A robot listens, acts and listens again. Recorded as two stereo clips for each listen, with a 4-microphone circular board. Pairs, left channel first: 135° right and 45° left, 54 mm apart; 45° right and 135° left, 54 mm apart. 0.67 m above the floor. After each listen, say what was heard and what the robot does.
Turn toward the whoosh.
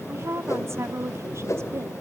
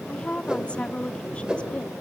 The whoosh: 150° right. Turn 150° right.
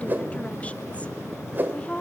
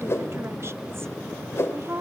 Found it: a whoosh, straight ahead, 2 to 4 m away.